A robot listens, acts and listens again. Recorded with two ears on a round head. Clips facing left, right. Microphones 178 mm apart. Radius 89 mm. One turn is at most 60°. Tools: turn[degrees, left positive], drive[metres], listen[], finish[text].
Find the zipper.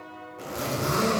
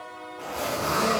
Thought: The zipper: about 20° left or 160° left.
Action: turn[20]
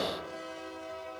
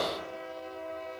Action: listen[]
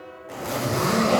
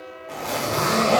Action: finish[Facing the zipper, under 1 m away.]